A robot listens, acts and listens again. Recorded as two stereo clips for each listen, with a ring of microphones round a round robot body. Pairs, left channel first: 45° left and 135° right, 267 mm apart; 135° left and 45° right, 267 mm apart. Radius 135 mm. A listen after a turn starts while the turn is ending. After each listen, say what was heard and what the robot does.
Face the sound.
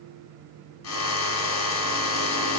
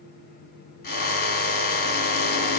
The drill: 80° left. Turn 80° left.
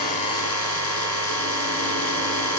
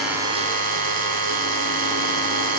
The drill is now 15° left. Turn 15° left.
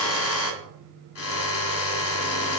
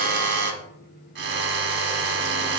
Found it: a drill, straight ahead, 1 to 2 m away.